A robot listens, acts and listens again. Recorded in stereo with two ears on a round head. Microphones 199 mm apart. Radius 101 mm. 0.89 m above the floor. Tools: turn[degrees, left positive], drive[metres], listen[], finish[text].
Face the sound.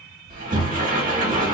Thought: The sliding door: about 40° right or 140° right.
Action: turn[-40]
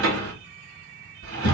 Thought: So it is at 100° right.
Action: turn[-100]
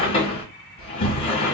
Thought: The sliding door is now 25° left.
Action: turn[25]
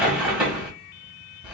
Action: finish[Found it: a sliding door, straight ahead.]